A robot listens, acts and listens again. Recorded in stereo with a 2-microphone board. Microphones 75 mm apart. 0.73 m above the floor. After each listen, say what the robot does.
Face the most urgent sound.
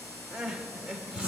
Turn 30° right.
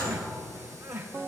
Turn 140° right.
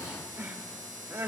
Turn 25° right.
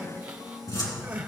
Turn 20° right.
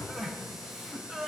Facing the crying.